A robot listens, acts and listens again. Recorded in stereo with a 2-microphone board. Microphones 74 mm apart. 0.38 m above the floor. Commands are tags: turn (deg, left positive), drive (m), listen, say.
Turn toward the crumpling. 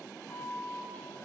<listen/>
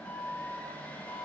<listen/>
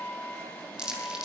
<turn deg="-30"/>
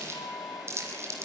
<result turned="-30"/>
<turn deg="-140"/>
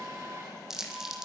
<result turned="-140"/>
<say>Facing the crumpling, 2 to 4 m away.</say>